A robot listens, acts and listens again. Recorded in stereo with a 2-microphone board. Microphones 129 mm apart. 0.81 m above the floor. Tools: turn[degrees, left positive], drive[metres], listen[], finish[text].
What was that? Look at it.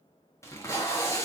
Thought: The tape being pulled: about 20° left or 160° left.
Action: turn[20]
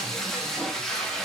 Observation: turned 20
Action: finish[Found it: tape being pulled, straight ahead, under 1 m away.]